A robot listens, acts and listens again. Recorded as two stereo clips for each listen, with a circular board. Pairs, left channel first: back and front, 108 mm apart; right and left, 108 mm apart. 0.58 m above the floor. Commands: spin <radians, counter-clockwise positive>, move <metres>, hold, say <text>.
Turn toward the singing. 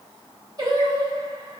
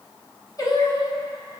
spin -0.87
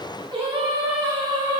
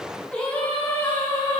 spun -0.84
spin -0.79
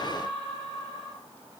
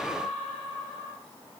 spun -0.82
spin -0.35
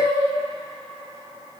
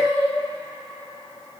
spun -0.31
spin -0.44
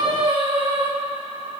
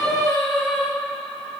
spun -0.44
say Facing the singing.